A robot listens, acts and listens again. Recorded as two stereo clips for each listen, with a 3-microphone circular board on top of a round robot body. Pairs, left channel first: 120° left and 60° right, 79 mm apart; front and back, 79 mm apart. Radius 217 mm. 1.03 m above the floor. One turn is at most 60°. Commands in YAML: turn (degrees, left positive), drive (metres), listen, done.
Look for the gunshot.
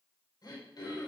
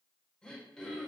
listen: true
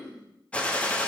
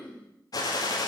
turn: 45
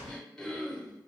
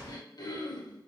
done: "Facing where the gunshot came from. I can't hear it now."